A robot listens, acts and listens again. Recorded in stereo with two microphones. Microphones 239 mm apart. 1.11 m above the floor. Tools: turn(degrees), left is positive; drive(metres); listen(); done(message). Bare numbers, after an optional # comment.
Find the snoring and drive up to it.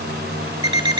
listen()
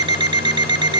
listen()
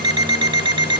done("I can't make out snoring, only an alarm clock.")